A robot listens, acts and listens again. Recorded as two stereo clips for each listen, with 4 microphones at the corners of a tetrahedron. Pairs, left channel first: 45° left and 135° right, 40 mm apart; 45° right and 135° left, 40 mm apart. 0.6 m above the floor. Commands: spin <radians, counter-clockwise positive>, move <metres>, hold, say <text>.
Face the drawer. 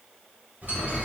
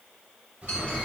spin -3.05
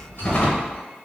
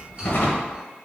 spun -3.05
spin -0.17
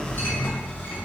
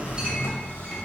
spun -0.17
say Facing the drawer.